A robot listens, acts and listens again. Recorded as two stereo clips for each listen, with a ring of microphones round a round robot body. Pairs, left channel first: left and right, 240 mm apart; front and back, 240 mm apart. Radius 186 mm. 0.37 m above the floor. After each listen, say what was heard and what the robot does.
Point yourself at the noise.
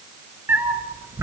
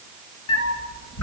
The cat meowing: 10° right. Turn 10° right.
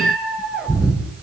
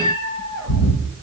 Found it: a cat meowing, straight ahead, over 4 m away.